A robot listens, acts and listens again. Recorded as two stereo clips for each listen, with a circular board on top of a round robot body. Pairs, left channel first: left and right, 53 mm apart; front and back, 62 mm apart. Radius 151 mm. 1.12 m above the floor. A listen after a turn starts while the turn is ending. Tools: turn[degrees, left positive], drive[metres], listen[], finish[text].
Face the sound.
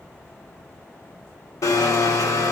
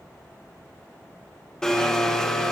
Thought: The blender: 80° left.
Action: turn[80]
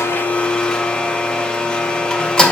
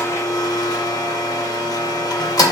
Thought: The blender is now 15° left.
Action: turn[15]
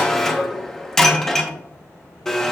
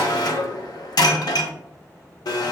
Action: finish[Found it: a blender, straight ahead, under 1 m away.]